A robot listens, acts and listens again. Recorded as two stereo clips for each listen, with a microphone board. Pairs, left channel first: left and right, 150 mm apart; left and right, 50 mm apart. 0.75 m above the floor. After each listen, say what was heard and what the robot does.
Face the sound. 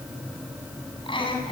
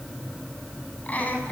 The laughter: about 35° left or 145° left. Turn 35° left.
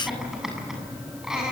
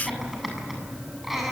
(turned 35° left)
Facing the laughter, over 4 m away.